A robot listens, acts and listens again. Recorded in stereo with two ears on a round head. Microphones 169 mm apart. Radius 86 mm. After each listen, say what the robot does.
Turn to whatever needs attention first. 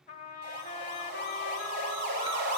Turn 55° right.
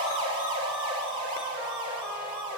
Turn 35° right.
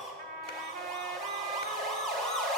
Found it: a siren, straight ahead.